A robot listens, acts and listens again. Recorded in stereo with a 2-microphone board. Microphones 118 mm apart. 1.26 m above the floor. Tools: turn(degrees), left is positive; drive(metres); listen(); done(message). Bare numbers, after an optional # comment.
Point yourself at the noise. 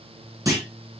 # The clunk: about 30° right or 150° right.
turn(-30)
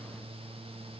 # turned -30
listen()
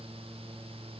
done("I heard a clunk, but can't make it out now. It was about straight ahead or 120° right.")